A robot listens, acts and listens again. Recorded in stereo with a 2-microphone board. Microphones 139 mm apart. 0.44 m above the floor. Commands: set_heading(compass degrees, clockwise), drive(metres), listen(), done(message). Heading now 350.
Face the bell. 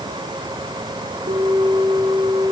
set_heading(40)
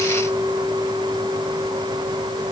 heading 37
set_heading(122)
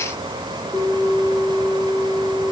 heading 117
done("Found it: a bell, straight ahead, over 4 m away.")